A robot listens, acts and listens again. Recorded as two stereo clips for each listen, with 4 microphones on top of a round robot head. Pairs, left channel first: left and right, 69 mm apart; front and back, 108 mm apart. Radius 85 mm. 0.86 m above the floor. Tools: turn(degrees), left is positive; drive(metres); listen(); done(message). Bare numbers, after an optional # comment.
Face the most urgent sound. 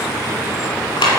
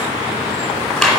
listen()
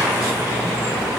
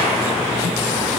listen()
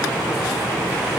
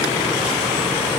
done("I can't make out anything urgent, only a clap.")